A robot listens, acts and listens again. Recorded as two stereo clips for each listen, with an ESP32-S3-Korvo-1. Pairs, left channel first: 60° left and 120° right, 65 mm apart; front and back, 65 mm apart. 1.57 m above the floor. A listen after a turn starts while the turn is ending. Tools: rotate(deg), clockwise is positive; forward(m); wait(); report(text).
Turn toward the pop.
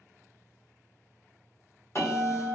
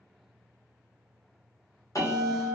wait()
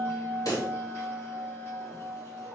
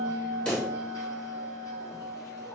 rotate(-70)
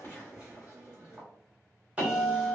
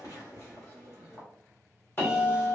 report("Facing where the pop came from. I can't hear it now.")